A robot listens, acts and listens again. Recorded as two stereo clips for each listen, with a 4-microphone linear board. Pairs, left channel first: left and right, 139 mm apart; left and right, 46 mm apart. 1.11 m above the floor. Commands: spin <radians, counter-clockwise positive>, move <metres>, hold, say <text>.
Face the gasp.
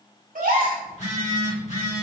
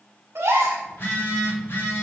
spin -1.57
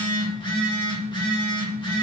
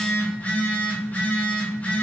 say I heard a gasp from this way, but can't make it out now.